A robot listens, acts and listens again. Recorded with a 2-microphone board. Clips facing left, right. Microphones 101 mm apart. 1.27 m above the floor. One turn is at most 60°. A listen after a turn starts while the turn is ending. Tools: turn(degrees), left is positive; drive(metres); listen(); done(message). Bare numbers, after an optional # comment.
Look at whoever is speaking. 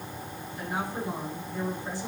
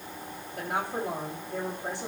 # The woman speaking: about 70° right or 110° right.
turn(-60)
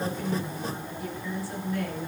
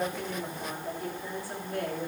# So it is at 50° right.
turn(-50)
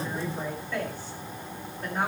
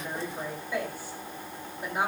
# The woman speaking is now 10° right.
turn(-10)
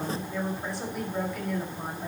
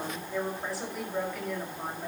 done("Facing the woman speaking, over 4 m away.")